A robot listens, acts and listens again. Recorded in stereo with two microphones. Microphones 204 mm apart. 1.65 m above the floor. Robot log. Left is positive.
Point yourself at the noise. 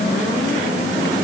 cmd idle
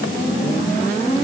cmd idle
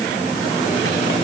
end: I can't make out anything.